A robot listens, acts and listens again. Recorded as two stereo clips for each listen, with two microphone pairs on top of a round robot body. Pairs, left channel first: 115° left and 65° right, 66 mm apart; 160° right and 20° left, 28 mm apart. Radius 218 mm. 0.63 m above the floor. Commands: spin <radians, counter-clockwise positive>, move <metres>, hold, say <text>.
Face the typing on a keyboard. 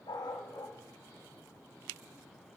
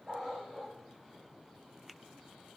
hold
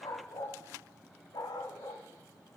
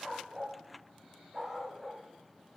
hold
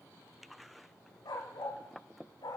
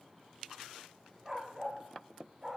say I can't make out typing on a keyboard, only a dog barking.